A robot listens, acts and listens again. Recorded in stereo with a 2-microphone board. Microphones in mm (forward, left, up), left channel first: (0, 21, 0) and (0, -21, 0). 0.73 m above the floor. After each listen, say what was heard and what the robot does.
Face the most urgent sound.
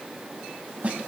Keep listening.
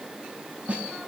Keep listening.
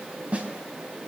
I can't make out anything urgent, only a snare drum.